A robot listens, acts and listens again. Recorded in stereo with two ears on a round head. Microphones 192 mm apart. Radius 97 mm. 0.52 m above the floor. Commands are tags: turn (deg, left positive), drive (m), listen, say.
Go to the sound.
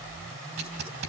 <turn deg="-50"/>
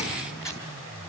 <drive m="1.0"/>
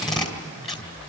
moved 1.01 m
<drive m="1.0"/>
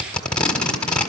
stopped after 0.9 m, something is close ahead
<say>Arrived at the tape being pulled, straight ahead.</say>